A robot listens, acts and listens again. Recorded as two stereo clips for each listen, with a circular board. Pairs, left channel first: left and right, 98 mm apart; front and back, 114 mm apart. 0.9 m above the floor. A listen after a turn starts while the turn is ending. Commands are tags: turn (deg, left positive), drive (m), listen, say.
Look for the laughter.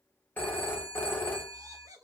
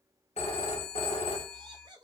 <turn deg="-135"/>
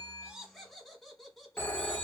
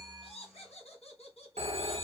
<say>Facing the laughter, 1 to 2 m away.</say>